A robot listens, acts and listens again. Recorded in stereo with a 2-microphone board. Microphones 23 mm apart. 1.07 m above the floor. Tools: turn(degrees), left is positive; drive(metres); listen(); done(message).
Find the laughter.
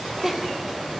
turn(degrees=-30)
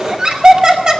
turn(degrees=-140)
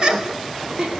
turn(degrees=-40)
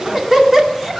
turn(degrees=-15)
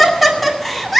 done("Facing the laughter, 2 to 4 m away.")